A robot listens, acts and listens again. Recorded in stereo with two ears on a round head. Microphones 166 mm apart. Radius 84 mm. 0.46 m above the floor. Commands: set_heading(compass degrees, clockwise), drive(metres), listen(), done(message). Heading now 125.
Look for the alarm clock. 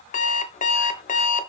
set_heading(85)
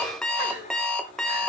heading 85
done("Facing the alarm clock, under 1 m away.")